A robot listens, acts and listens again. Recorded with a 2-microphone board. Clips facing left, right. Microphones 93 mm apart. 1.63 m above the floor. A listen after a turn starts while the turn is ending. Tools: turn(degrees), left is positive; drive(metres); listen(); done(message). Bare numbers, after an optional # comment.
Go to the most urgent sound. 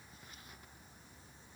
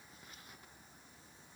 listen()
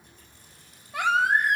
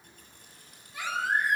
# The baby crying: about 70° left or 110° left.
turn(70)
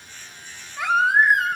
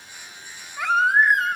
drive(1.0)
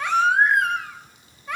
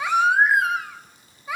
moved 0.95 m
drive(1.0)
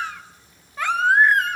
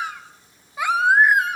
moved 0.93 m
# The baby crying is now 10° right.
turn(-10)
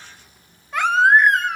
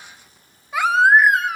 drive(1.0)
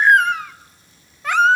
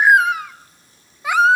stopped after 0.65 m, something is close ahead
# The baby crying is now 10° right.
turn(-10)
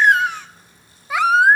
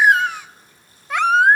done("I am next to the baby crying.")